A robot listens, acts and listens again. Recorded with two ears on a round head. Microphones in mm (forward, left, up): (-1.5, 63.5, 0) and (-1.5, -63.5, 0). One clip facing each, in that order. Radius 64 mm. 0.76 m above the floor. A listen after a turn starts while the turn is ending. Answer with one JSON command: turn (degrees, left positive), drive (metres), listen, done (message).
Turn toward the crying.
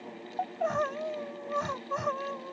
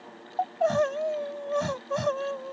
{"turn": -40}
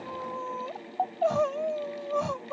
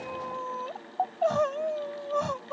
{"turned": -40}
{"done": "Found it: crying, straight ahead."}